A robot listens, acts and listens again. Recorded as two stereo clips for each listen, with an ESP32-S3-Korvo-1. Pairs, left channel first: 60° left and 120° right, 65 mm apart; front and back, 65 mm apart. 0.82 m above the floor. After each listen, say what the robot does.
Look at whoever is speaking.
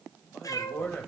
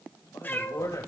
Found it: a man speaking, straight ahead, over 4 m away.